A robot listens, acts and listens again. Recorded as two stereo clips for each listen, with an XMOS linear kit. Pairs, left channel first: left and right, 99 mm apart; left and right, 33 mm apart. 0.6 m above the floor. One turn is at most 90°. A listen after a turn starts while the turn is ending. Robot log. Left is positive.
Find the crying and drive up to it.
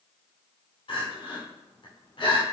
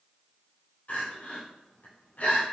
note: The crying: about 55° left or 125° left.
cmd yaw +55
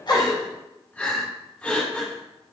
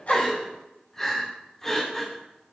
note: So it is at 15° left.
cmd yaw +15
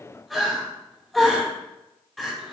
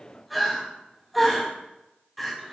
cmd fwd 1.0
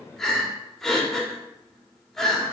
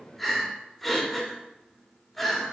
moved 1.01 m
note: The crying is now 10° left.
cmd yaw +10
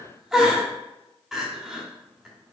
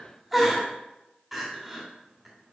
cmd fwd 1.0
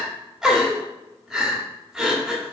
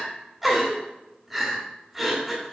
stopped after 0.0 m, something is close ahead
end: I am next to the crying.